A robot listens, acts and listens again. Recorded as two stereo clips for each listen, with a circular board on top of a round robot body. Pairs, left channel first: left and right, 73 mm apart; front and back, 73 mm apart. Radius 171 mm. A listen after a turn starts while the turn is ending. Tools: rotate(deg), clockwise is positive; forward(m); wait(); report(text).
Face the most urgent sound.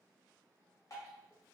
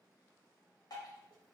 wait()
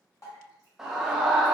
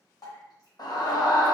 report("Facing the scream, 1 to 2 m away.")